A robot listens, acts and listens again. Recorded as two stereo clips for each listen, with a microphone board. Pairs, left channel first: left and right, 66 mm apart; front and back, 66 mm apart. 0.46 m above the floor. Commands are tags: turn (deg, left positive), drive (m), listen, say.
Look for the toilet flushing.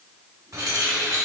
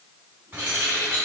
<listen/>
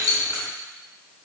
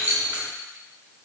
<listen/>
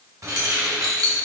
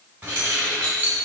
<say>I can't make out a toilet flushing, only keys jangling.</say>